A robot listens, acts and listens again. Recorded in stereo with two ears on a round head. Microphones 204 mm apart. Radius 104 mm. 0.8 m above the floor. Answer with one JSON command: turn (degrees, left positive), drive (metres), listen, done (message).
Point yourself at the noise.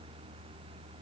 {"listen": true}
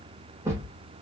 {"turn": -30}
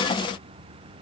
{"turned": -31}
{"listen": true}
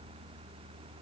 {"done": "I heard a thud, but can't make it out now. It was about 20° left or 140° right."}